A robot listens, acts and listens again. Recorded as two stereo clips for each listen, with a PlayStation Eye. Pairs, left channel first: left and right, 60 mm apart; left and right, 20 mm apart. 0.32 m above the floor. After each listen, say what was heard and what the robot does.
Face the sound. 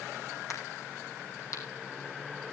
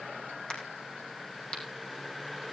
The crack: about 65° left or 115° left. Turn 65° left.
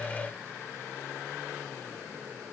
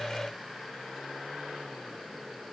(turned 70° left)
Keep listening.
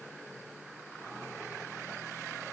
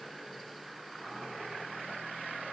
I heard a crack, but can't make it out now. It was about 5° right or 45° left.